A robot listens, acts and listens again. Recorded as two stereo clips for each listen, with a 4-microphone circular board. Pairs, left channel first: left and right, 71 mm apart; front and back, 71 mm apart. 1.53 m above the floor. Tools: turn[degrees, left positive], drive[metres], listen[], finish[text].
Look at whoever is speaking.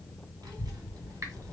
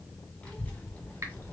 Thought: The child speaking: 65° right.
Action: turn[-65]
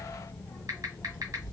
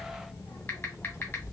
Thought: The child speaking is now 45° left.
Action: turn[45]
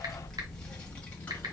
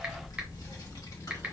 Thought: The child speaking is now 25° left.
Action: turn[25]
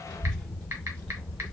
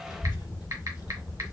Thought: The child speaking is now 10° left.
Action: turn[10]
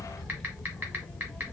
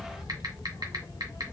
Action: finish[Facing the child speaking, 1 to 2 m away.]